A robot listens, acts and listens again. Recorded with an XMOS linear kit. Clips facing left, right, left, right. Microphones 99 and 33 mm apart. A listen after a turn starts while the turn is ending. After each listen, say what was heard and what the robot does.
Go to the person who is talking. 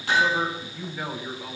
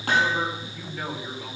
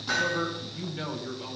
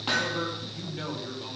Turn 30° left.
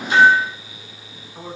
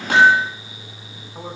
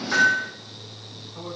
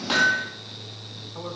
Keep listening.
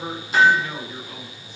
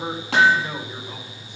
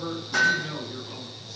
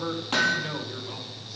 So it is at 20° right. Turn 20° right.
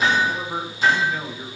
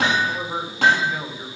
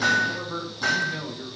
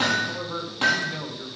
The man speaking is now 10° right. Turn 10° right.
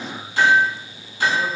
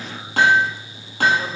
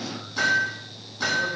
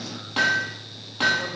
Keep listening.
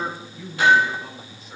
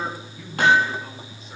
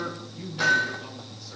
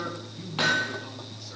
Drive 1.0 m forward.
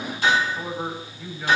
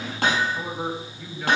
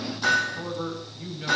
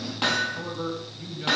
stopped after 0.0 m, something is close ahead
Blocked. The man speaking is further on, straight ahead.